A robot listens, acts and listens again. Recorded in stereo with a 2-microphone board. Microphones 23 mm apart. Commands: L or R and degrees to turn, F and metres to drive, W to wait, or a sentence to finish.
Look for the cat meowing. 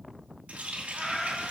L30
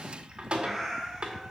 R10
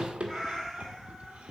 L10
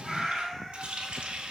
Facing the cat meowing, over 4 m away.